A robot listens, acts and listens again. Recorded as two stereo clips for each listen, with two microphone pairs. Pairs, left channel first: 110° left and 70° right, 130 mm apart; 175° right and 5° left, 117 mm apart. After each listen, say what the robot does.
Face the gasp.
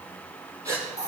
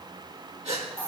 Turn 10° right.
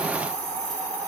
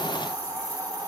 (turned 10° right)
I heard a gasp from this way, but can't make it out now.